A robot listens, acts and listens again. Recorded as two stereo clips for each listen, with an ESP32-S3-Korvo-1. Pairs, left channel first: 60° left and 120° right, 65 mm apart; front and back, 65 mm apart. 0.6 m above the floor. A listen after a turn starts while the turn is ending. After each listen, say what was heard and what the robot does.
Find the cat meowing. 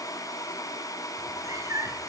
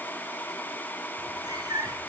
The cat meowing: 160° right. Turn 160° right.
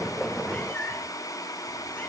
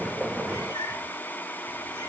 Facing the cat meowing.